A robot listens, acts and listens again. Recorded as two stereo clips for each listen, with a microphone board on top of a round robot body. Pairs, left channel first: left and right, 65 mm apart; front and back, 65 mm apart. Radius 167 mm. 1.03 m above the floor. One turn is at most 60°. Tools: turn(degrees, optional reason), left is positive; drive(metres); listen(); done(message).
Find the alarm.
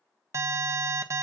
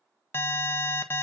turn(degrees=-50, reason="The alarm: 50° right.")
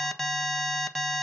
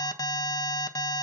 done("Found it: an alarm, straight ahead, 1 to 2 m away.")